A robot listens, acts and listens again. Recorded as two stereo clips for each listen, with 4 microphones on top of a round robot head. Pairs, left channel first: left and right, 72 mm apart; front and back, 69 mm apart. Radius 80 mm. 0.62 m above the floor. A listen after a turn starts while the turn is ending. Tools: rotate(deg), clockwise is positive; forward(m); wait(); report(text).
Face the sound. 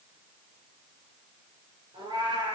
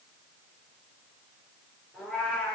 rotate(80)
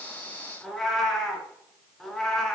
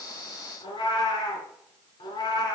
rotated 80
report("Found it: a cat meowing, straight ahead, 2 to 4 m away.")